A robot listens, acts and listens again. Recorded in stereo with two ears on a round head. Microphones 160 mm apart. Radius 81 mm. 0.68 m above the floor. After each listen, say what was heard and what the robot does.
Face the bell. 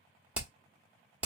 Keep listening.
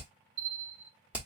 The bell: about 70° right or 110° right. Turn 70° right.
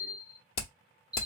Found it: a bell, straight ahead.